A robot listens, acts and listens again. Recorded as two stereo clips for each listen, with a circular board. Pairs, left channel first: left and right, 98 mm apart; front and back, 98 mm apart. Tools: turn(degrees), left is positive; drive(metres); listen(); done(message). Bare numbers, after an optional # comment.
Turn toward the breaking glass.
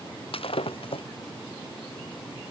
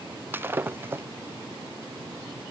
# The breaking glass: 110° left.
turn(110)
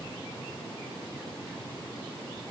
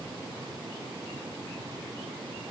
done("I heard breaking glass from this way, but can't make it out now.")